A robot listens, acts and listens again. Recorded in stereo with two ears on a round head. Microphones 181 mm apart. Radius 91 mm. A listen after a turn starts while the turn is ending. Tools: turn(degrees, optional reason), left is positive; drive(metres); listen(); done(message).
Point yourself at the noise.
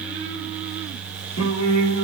turn(degrees=90)
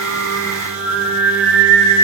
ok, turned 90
done("Facing the singing, 2 to 4 m away.")